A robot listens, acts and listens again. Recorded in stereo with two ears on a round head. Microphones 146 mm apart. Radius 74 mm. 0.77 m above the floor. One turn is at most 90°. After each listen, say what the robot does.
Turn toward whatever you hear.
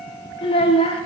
Turn 35° left.
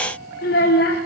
Turn 90° left.
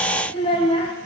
Turn 30° left.
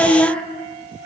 Facing the child speaking.